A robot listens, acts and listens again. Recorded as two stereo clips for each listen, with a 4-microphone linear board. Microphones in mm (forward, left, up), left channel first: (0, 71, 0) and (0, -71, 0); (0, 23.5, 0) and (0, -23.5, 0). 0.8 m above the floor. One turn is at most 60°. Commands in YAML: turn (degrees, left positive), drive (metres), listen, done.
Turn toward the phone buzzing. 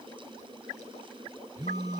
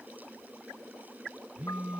turn: -25
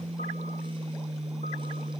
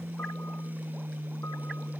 turn: -60
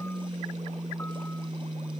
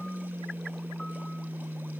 turn: -55
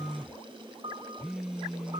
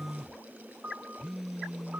done: "Facing the phone buzzing."